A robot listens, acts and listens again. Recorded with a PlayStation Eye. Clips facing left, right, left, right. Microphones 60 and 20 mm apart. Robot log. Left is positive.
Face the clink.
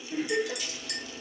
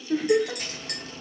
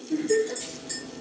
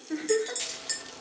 note: The clink: about 45° right or 135° right.
cmd yaw -45
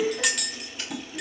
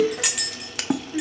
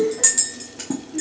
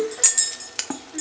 end: Facing the clink.